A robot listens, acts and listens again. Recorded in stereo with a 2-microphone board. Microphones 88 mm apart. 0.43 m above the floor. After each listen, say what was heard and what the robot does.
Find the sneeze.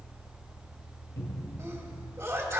The sneeze: about 30° right or 150° right. Turn 30° right.
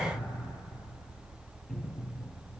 Keep listening.
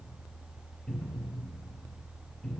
I heard a sneeze, but can't make it out now. It was about straight ahead or 120° right.